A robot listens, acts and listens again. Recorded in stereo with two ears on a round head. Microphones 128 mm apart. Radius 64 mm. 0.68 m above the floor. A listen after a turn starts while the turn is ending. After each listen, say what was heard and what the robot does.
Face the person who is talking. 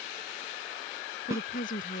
The woman speaking: about 65° left or 115° left. Turn 65° left.
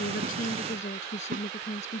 So it is at 50° left. Turn 50° left.
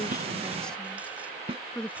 Facing the woman speaking.